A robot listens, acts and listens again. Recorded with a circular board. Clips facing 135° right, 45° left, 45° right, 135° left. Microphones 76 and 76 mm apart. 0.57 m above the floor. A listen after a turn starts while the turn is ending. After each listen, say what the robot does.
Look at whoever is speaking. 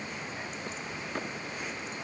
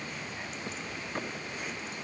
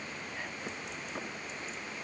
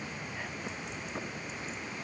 Keep listening.
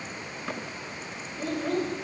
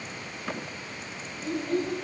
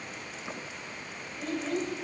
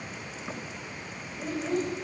Turn 145° right.
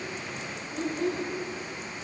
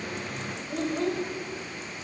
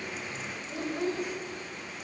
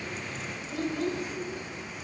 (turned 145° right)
Turn 25° left.
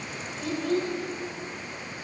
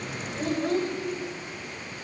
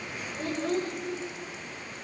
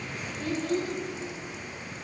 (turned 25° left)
Facing the child speaking.